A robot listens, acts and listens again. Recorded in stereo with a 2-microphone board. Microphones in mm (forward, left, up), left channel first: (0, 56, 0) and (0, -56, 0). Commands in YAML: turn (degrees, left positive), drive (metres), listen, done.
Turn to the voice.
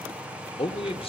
turn: 55
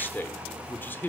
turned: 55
turn: 20
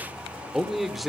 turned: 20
done: "Facing the man speaking."